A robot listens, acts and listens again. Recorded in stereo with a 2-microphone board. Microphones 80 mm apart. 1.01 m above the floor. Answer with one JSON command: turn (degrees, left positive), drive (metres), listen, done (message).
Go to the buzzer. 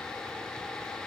{"listen": true}
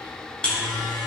{"turn": 30}
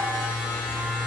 {"turn": -15}
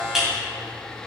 {"drive": 1.0}
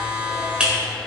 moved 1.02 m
{"turn": -15}
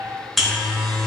{"drive": 1.0}
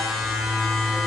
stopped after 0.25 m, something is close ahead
{"done": "Arrived at the buzzer, straight ahead."}